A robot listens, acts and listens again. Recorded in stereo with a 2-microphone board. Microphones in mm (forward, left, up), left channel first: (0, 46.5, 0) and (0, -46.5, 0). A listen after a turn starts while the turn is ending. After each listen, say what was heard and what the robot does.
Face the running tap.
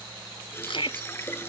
The running tap: about 25° left or 155° left. Turn 25° left.
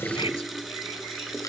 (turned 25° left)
Facing the running tap.